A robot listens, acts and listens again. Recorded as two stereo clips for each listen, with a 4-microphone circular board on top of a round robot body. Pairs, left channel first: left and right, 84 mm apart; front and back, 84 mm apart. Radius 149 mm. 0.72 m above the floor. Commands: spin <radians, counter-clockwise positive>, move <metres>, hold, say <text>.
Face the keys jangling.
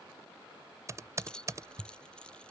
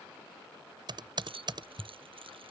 spin 2.97
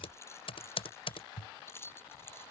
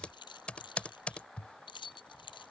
spin 0.52
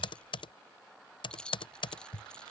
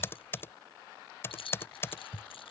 spin 0.17
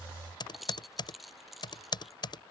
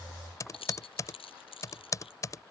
say Facing the keys jangling.